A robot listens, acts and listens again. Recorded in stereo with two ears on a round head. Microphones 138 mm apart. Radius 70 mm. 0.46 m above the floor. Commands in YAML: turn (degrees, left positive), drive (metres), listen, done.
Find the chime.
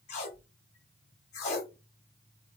listen: true
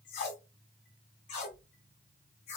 listen: true
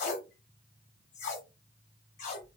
done: "I can't make out a chime to turn to."